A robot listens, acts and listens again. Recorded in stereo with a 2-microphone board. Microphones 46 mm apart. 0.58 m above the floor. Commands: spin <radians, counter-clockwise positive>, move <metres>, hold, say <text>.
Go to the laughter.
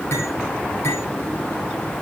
hold
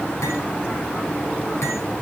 hold
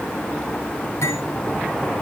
say I can't make out laughter, only cutlery clinking.